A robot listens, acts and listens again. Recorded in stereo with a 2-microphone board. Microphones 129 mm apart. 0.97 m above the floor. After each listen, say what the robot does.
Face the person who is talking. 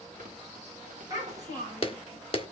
Turn 30° right.
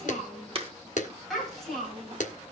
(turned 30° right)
Found it: a child speaking, straight ahead, over 4 m away.